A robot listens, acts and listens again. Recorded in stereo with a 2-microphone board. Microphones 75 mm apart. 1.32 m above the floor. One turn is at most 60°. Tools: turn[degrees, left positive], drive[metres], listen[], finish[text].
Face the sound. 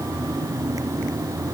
Action: listen[]
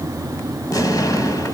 Thought: The explosion: about 50° left or 130° left.
Action: turn[50]
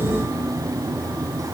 Action: listen[]
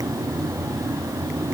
Action: finish[I heard an explosion, but can't make it out now. It was about straight ahead or 80° left.]